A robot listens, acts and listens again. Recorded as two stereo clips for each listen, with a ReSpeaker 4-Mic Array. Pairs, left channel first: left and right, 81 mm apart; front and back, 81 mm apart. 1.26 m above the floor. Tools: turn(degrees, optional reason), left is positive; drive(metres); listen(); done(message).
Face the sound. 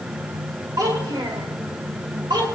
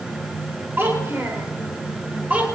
turn(degrees=-110, reason="The child speaking: 110° right.")
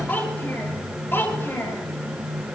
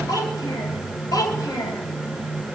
turn(degrees=30, reason="The child speaking is now 30° left.")
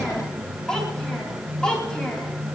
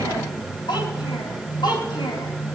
turn(degrees=10, reason="The child speaking is now 10° left.")
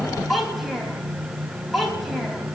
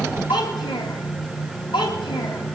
done("Found it: a child speaking, straight ahead, over 4 m away.")